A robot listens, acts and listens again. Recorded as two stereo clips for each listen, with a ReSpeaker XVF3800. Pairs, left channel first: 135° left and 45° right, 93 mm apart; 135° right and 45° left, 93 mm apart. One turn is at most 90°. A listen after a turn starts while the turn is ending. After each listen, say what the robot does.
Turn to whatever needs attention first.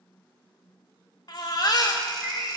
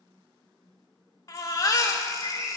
Turn 90° left.
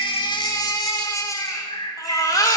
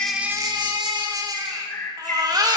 Turn 85° left.
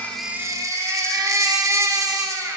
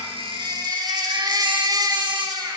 Turn 10° left.
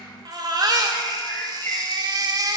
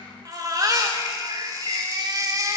Facing the baby crying.